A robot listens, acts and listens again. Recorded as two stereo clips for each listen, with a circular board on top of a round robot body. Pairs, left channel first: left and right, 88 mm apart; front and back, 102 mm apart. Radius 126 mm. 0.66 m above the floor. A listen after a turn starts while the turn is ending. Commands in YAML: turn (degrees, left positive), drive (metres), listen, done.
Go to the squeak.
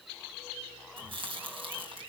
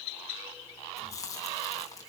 listen: true
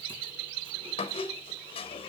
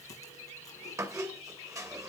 turn: 120
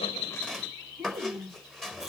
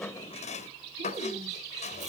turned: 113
drive: 1.0
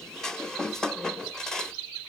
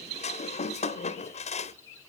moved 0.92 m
drive: 1.0
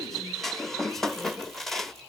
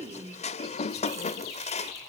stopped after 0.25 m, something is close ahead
done: "Arrived at the squeak, straight ahead."